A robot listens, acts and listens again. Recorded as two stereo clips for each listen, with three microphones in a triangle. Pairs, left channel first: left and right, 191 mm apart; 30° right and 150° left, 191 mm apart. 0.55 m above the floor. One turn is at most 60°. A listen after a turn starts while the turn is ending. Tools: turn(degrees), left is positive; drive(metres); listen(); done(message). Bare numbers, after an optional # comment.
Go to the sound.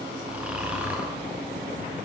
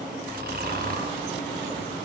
# The snoring: 175° right.
turn(-60)
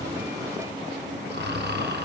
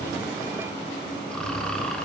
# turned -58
# The snoring is now 115° right.
turn(-60)
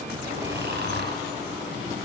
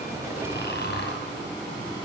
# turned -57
# The snoring is now 60° right.
turn(-60)
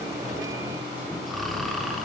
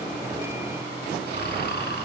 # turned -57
drive(1.0)
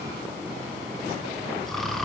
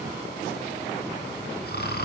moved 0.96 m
drive(1.0)
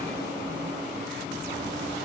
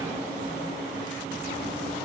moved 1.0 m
listen()
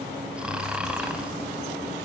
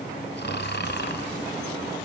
drive(1.0)
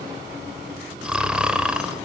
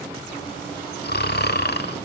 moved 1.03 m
drive(1.0)
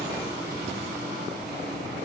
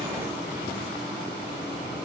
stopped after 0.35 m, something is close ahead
listen()
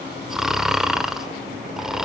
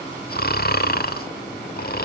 done("Arrived at the snoring, straight ahead.")